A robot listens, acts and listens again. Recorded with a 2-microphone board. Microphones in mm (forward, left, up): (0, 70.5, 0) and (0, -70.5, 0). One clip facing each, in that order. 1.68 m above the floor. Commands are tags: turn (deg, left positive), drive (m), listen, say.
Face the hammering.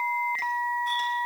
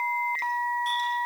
<listen/>
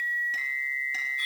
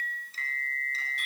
<listen/>
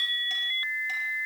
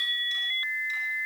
<say>I can't make out hammering to turn to.</say>